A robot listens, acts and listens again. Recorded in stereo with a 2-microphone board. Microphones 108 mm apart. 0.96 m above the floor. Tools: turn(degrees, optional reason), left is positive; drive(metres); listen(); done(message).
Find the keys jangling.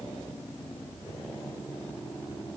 listen()
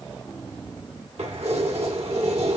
turn(degrees=-90)
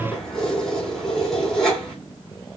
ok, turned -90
done("Found it: keys jangling, straight ahead, 2 to 4 m away.")